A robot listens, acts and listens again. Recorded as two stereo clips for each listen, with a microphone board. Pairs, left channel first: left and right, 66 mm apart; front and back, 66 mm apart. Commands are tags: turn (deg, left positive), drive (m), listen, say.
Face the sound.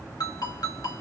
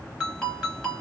<turn deg="80"/>
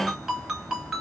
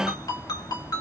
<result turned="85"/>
<say>Found it: a ringtone, straight ahead, 2 to 4 m away.</say>